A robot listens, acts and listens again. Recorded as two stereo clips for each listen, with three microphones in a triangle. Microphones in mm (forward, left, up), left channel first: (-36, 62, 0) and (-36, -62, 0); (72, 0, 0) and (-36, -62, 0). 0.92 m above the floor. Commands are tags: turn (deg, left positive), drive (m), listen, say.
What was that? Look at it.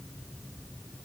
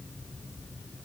<listen/>
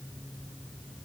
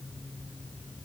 <listen/>
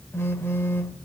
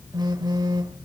<turn deg="160"/>
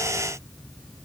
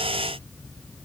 <listen/>
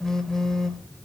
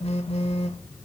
<say>Facing the phone buzzing, 1 to 2 m away.</say>